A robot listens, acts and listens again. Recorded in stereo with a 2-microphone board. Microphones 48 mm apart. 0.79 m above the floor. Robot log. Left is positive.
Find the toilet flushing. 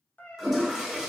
cmd yaw -30
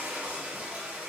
note: So it is at 150° right.
cmd yaw -150
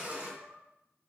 note: The toilet flushing is now 40° right.
cmd yaw -40
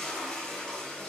note: The toilet flushing is now 20° left.
cmd yaw +20
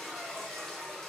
end: Found it: a toilet flushing, straight ahead, 1 to 2 m away.